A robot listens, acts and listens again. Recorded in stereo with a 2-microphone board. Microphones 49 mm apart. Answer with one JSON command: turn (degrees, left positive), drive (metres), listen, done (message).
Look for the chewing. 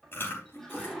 {"turn": 50}
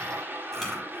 {"done": "Found it: chewing, straight ahead."}